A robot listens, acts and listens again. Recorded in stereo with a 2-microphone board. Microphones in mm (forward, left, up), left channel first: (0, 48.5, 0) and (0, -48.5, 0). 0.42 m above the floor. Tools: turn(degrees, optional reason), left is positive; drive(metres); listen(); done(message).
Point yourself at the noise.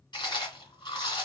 turn(degrees=55, reason="The chewing: about 55° left or 125° left.")
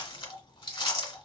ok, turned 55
turn(degrees=65, reason="So it is at 65° left.")
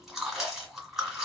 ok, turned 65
done("Found it: chewing, straight ahead.")